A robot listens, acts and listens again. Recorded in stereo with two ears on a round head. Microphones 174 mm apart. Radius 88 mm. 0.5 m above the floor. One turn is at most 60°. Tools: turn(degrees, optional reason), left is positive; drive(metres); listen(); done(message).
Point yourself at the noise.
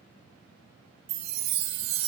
turn(degrees=-55, reason="The chime: about 55° right or 125° right.")
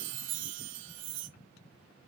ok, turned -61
turn(degrees=-60, reason="So it is at 65° right.")
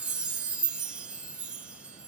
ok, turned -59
done("Found it: a chime, straight ahead, 1 to 2 m away.")